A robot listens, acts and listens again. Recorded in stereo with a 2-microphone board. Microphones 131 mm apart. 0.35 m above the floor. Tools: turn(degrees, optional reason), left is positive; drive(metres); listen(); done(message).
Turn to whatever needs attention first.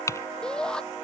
turn(degrees=30)
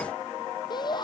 turn(degrees=145, reason="So it is at 145° left.")
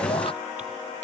listen()
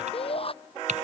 turn(degrees=45, reason="The shout is now 45° left.")
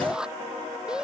done("Facing the shout.")